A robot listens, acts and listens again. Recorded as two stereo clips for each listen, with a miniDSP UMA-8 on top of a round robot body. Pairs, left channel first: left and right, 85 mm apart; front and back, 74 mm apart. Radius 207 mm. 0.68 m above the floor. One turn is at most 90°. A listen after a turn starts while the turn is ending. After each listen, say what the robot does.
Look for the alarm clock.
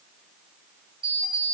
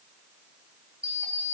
Turn 90° right.
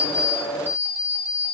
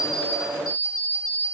Turn 25° right.
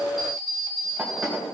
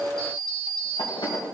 Facing the alarm clock, 2 to 4 m away.